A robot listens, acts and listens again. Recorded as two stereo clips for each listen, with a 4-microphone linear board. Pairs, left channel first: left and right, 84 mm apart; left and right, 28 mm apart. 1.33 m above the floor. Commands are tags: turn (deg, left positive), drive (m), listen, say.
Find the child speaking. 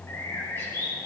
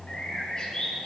<listen/>
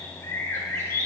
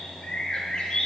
<listen/>
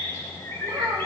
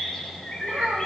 <turn deg="-70"/>
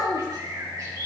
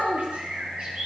<turn deg="-50"/>
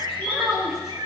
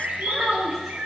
<say>Facing the child speaking, 2 to 4 m away.</say>